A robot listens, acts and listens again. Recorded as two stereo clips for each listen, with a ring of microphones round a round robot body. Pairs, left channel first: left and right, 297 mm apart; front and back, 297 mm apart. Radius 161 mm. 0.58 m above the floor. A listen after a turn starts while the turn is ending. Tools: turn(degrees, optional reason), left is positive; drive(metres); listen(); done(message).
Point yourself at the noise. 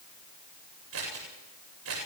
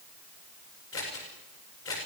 turn(degrees=-45, reason="The scissors: 45° right.")
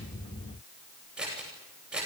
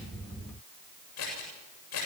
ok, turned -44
done("Found it: scissors, straight ahead.")